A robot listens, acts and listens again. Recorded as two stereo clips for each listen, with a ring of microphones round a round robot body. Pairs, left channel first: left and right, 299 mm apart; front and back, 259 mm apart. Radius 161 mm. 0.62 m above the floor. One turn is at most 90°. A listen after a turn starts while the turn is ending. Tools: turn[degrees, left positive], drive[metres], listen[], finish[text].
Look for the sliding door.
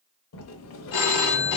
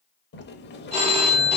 Thought: The sliding door: 50° left.
Action: turn[50]
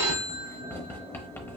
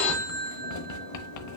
Thought: The sliding door is now 10° left.
Action: turn[10]
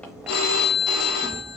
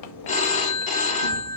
Action: finish[Found it: a sliding door, straight ahead.]